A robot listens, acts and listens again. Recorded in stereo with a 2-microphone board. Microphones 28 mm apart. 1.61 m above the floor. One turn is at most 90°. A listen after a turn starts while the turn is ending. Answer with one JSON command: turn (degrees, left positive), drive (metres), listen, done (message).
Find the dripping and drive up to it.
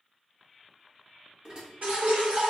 {"turn": -90}
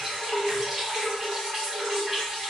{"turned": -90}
{"turn": -10}
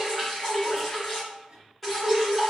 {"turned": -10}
{"drive": 1.0}
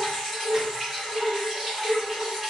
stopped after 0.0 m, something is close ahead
{"done": "Blocked. The dripping is further on, straight ahead."}